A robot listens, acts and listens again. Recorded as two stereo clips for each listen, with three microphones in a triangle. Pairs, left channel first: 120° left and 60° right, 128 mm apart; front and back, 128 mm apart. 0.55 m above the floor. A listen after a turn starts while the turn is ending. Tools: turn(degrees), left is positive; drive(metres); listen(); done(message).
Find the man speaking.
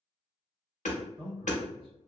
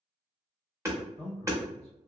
turn(degrees=-20)
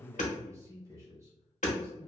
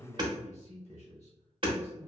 done("Facing the man speaking, 1 to 2 m away.")